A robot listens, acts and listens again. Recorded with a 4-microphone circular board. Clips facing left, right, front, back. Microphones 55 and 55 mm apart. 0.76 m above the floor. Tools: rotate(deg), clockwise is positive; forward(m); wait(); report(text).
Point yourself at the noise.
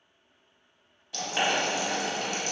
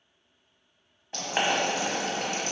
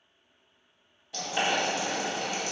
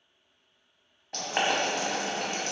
rotate(140)
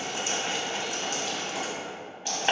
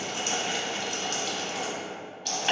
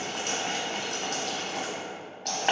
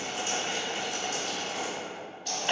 rotate(-20)
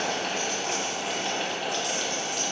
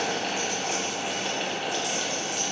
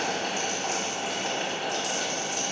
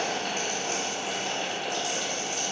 report("Found it: boiling, straight ahead, under 1 m away.")